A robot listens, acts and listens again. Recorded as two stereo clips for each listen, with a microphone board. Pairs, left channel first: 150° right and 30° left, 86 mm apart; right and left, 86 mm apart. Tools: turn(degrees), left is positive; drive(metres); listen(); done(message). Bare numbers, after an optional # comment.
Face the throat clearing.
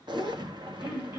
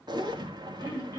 # The throat clearing: 35° right.
turn(-35)
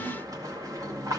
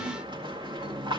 listen()
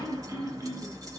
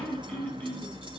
# The throat clearing is now 15° right.
turn(-15)
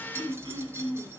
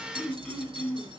done("Facing the throat clearing.")